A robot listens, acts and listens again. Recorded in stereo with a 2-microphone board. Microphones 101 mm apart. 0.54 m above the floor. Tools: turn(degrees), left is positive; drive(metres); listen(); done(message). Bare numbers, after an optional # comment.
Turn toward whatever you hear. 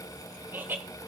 # The laughter: about 20° right or 160° right.
turn(-20)
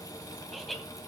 done("Facing the laughter.")